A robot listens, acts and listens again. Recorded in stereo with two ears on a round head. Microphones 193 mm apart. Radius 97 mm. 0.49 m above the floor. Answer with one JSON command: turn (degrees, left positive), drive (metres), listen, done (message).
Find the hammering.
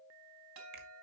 {"listen": true}
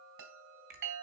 {"listen": true}
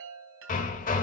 {"turn": 40}
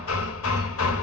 {"turn": 105}
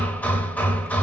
{"turn": 10}
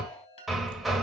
{"done": "Found it: hammering, straight ahead."}